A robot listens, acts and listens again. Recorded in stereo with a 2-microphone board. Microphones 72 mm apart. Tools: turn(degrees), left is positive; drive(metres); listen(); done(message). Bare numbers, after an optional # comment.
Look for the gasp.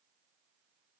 listen()
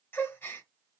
# The gasp: about 30° left or 150° left.
turn(30)
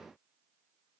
listen()
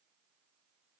done("I heard a gasp, but can't make it out now. It was about straight ahead or 120° left.")